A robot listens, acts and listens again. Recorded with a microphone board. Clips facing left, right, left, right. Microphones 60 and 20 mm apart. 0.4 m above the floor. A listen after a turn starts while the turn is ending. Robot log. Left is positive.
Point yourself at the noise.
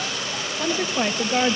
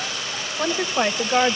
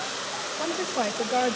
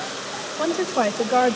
note: The woman speaking: about 20° right or 160° right.
cmd yaw -20
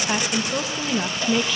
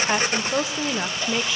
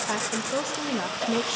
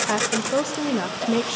cmd yaw -30
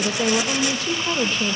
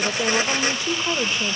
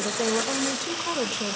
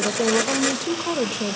cmd yaw -30
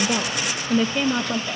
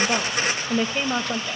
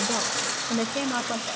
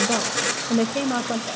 note: The woman speaking: about 15° right or 165° right.
cmd yaw -15
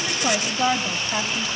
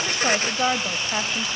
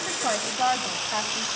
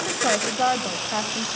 note: The woman speaking: about 20° right or 160° right.
cmd yaw -20
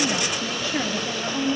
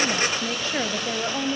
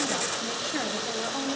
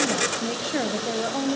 note: The woman speaking: about 35° right or 145° right.
cmd yaw -35
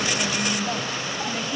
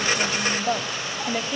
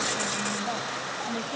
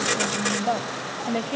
note: So it is at 120° right.
cmd yaw -120
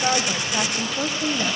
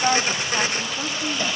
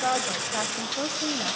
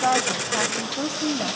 note: The woman speaking is now 20° left.
cmd yaw +20
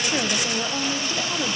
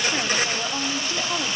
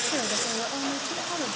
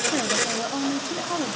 end: Found it: a woman speaking, straight ahead, 1 to 2 m away.